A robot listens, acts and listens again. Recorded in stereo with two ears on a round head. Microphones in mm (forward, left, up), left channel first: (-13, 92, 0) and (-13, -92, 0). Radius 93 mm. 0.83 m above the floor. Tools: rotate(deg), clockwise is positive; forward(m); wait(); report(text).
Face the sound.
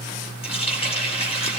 rotate(-30)
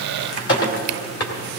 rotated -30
rotate(-125)
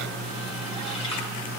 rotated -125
wait()
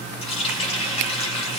rotate(-25)
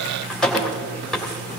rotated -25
report("Facing the running tap, 2 to 4 m away.")